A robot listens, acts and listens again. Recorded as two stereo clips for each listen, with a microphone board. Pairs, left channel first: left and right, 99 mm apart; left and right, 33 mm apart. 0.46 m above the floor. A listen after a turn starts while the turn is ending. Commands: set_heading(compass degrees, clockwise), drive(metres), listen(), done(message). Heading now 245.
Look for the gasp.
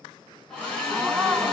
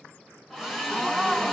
set_heading(275)
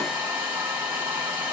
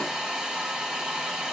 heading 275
listen()
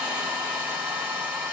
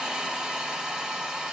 done("I heard a gasp, but can't make it out now. It was about 15° left or 135° right.")